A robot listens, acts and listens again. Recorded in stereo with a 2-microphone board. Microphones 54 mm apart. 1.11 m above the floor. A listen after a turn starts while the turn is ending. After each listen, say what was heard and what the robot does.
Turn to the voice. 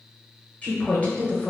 The woman speaking: about 25° left or 155° left. Turn 25° left.
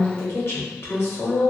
So it is at 130° left. Turn 130° left.
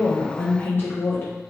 The woman speaking is now 50° left. Turn 50° left.
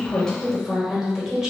The woman speaking is now 10° right. Turn 10° right.
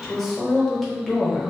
Facing the woman speaking.